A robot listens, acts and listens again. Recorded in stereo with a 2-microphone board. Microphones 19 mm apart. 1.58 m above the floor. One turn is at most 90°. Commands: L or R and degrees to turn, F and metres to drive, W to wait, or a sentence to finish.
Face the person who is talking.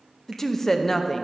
L20
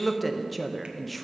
Facing the woman speaking, under 1 m away.